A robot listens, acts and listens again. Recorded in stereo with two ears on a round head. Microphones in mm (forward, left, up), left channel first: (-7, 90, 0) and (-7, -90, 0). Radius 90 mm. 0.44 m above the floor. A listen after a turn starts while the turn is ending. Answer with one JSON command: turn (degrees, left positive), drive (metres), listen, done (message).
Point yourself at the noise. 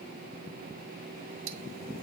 {"turn": -50}
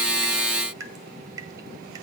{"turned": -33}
{"turn": -20}
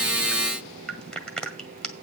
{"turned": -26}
{"done": "Found it: dripping, straight ahead."}